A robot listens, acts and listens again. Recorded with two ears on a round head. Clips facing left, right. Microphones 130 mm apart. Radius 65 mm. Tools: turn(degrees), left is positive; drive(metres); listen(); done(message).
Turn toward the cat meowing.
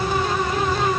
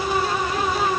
listen()
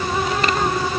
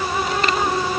listen()
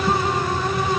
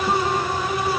done("I can't make out a cat meowing to turn to.")